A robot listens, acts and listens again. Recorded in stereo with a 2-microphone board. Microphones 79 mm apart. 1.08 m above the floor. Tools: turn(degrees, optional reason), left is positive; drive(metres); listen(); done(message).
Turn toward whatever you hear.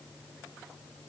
listen()
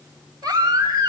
turn(degrees=-60, reason="The baby crying: about 60° right or 120° right.")
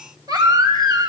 turn(degrees=-55, reason="So it is at 55° right.")
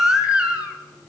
turn(degrees=-10, reason="The baby crying is now 10° right.")
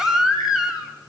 done("Found it: a baby crying, straight ahead.")